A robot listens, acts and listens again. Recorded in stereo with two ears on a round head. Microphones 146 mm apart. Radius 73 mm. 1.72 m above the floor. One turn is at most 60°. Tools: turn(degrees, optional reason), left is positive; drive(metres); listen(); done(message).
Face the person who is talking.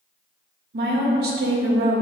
turn(degrees=-60, reason="The woman speaking: about 70° right or 110° right.")
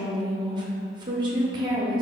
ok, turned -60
turn(degrees=-30, reason="So it is at 30° right.")
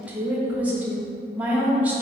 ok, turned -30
turn(degrees=-10, reason="The woman speaking is now 10° right.")
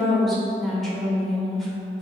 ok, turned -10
done("Found it: a woman speaking, straight ahead, under 1 m away.")